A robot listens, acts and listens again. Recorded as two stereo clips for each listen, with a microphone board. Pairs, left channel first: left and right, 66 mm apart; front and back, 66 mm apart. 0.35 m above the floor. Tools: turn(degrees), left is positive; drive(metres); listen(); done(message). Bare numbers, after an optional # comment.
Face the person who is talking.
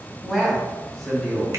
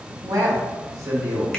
# The man speaking: 165° left.
turn(165)
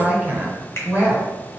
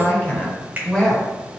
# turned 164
# The man speaking is now 75° right.
turn(-75)
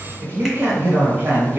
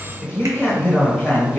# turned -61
# The man speaking is now 50° right.
turn(-50)
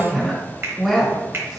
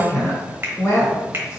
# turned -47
done("Facing the man speaking, 1 to 2 m away.")